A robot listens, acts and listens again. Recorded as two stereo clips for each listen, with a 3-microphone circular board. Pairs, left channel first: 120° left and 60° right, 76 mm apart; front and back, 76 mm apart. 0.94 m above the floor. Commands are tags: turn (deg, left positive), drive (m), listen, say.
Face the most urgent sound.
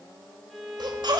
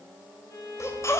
<turn deg="-50"/>
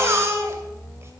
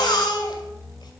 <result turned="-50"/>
<turn deg="-10"/>
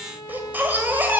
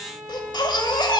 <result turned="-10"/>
<say>Found it: a baby crying, straight ahead.</say>